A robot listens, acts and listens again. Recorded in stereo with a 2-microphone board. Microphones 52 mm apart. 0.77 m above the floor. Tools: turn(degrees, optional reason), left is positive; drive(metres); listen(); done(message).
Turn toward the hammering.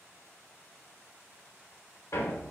turn(degrees=65, reason="The hammering: about 65° left or 115° left.")
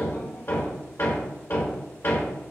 turn(degrees=50, reason="So it is at 50° left.")
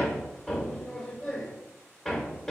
turn(degrees=10, reason="The hammering is now 10° left.")
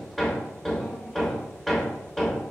done("Facing the hammering, 1 to 2 m away.")